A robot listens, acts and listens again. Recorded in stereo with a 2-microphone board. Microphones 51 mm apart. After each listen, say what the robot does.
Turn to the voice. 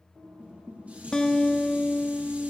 Keep listening.
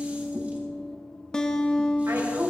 Turn 70° right.
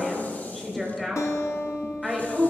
Facing the woman speaking, over 4 m away.